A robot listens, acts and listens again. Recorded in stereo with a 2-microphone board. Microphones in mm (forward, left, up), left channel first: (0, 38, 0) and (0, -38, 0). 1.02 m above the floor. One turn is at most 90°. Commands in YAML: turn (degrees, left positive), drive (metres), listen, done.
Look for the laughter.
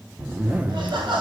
turn: -90
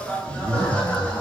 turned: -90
turn: 25
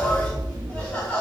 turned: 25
turn: 20
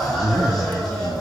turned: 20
done: "Facing the laughter, 2 to 4 m away."